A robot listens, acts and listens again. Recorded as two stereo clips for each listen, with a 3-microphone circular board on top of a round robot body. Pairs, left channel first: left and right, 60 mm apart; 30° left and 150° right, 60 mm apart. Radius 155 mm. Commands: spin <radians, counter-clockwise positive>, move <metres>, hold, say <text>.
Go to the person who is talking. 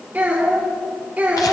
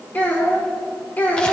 spin -0.52
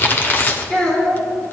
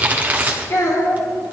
spin 0.26
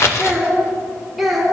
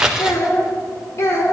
move 1.0
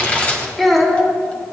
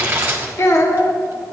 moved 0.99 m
move 1.0
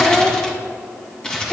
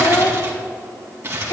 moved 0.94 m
spin 0.17
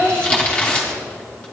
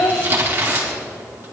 move 1.0
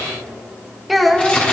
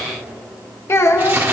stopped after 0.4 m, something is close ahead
say I am next to the child speaking.